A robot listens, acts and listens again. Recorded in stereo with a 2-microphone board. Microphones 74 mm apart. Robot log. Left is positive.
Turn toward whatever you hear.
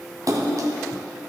note: The splash: about 50° right or 130° right.
cmd yaw -50
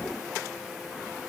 cmd idle
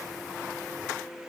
end: I heard a splash, but can't make it out now. It was about straight ahead or 80° right.